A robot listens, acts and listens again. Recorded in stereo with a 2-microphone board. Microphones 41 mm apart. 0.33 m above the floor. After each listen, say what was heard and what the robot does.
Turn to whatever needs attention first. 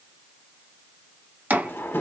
Keep listening.
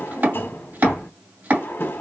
Keep listening.
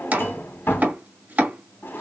I can't make out anything urgent to turn to.